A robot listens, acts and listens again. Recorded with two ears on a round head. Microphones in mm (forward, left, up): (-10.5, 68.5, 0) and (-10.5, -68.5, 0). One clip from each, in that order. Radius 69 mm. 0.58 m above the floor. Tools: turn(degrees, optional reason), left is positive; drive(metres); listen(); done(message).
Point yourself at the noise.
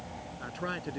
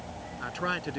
turn(degrees=-30, reason="The man speaking: about 30° right or 150° right.")
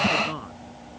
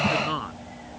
turn(degrees=-120, reason="So it is at 120° right.")
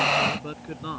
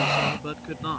turn(degrees=-15, reason="The man speaking is now 15° right.")
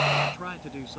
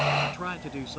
done("Found it: a man speaking, straight ahead.")